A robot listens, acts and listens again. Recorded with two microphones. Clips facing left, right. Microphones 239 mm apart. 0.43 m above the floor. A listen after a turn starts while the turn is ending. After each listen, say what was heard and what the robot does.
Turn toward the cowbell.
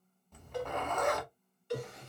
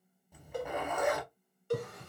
The cowbell: about 50° right or 130° right. Turn 50° right.
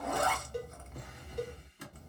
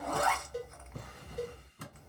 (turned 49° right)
Facing the cowbell.